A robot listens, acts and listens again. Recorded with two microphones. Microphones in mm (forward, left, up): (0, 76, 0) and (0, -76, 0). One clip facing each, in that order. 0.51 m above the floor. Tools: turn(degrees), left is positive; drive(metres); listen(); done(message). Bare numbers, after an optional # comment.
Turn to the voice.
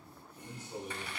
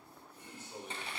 turn(30)
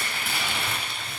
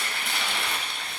listen()
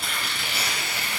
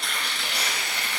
listen()
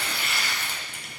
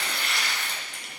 done("I heard a man speaking, but can't make it out now. It was about 15° right or 135° left.")